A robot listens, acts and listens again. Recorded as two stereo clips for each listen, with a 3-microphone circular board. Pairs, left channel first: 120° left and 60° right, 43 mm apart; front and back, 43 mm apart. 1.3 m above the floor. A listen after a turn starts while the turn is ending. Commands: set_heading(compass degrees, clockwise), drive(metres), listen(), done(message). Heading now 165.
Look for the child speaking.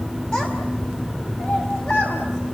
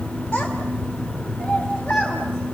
set_heading(95)
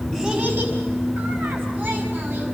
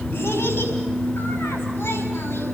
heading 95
listen()
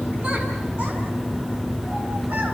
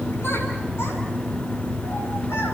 listen()
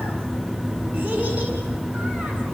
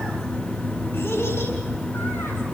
done("Facing where the child speaking came from. I can't hear it now.")